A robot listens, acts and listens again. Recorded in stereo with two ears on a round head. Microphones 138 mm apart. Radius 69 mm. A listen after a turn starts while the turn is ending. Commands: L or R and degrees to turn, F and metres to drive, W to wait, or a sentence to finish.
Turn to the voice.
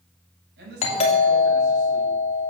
R90
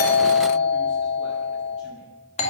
W
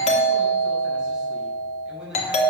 Found it: a man speaking, straight ahead, over 4 m away.